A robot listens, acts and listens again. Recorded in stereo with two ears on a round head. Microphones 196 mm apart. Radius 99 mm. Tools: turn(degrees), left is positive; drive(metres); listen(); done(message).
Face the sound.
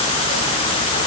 listen()
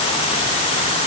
listen()
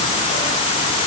done("I can't make out anything to turn to.")